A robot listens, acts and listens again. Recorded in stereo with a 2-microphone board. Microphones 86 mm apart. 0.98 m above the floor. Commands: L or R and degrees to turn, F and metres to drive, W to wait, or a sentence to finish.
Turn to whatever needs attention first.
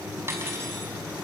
W
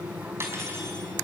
W
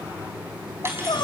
L60
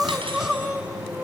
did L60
Found it: crying, straight ahead, 1 to 2 m away.